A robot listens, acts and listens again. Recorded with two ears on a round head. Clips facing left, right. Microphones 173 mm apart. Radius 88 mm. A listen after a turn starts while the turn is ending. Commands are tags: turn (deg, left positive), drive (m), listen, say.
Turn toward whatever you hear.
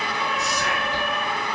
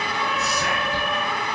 <turn deg="-90"/>
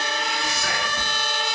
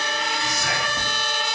<say>Found it: whispering, straight ahead, 1 to 2 m away.</say>